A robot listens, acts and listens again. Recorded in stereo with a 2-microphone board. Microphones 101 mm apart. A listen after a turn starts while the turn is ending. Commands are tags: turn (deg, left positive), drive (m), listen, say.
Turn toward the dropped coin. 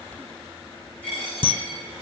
<turn deg="30"/>
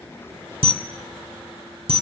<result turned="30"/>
<listen/>
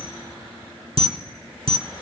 <say>I heard a dropped coin, but can't make it out now. It was about 15° right or 135° left.</say>